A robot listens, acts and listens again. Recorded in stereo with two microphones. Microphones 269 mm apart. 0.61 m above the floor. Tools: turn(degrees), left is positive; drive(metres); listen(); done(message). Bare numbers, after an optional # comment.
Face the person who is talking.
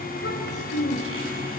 # The child speaking: about 50° left or 130° left.
turn(50)
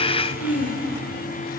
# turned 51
# So it is at 75° left.
turn(75)
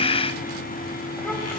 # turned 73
listen()
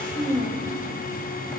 done("Found it: a child speaking, straight ahead, 2 to 4 m away.")